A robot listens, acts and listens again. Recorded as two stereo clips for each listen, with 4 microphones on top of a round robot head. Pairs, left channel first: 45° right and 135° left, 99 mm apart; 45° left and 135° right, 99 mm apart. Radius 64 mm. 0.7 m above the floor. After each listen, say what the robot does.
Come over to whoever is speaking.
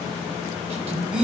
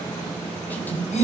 Turn 115° left.
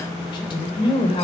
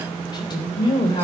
Drive 1.0 m forward.
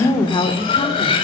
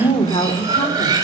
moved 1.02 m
Drive 1.0 m forward.
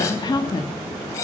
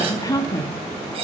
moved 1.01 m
Drive 1.0 m forward.
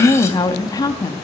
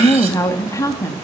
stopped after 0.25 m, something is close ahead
I am next to the woman speaking.